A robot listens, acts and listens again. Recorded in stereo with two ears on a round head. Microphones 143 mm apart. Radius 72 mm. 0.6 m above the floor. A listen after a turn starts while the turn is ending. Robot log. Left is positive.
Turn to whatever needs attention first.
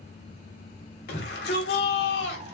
note: The shout: about 75° left or 105° left.
cmd yaw +75
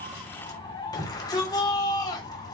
note: So it is at 25° left.
cmd yaw +25
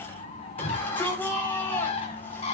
note: The shout is now 10° left.
cmd yaw +10
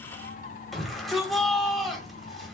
end: Found it: a shout, straight ahead, 2 to 4 m away.